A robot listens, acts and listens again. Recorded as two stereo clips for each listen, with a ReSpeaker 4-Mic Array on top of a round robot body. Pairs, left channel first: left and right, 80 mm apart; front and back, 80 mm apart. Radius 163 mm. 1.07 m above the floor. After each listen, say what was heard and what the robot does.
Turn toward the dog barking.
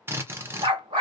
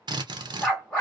The dog barking: 80° right. Turn 80° right.
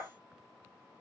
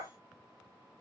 Keep listening.
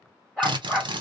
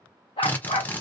Found it: a dog barking, straight ahead, 1 to 2 m away.